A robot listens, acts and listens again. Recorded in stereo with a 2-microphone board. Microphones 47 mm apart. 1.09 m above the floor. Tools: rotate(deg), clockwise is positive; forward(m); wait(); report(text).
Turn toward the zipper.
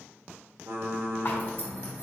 rotate(-45)
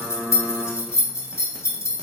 rotate(-90)
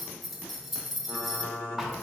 report("Facing the zipper, under 1 m away.")